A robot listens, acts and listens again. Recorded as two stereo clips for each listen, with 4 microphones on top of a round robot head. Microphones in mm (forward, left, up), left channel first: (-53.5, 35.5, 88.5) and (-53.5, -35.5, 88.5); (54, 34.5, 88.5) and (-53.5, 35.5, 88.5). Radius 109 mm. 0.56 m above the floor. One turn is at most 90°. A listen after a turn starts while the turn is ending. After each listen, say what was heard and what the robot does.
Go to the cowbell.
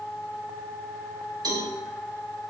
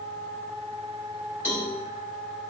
The cowbell: 110° right. Turn 90° right.
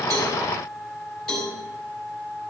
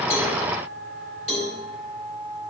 Drive 1.0 m forward.
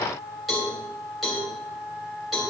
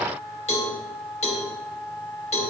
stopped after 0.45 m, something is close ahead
Something is in my way. I am facing the cowbell but have not reached it.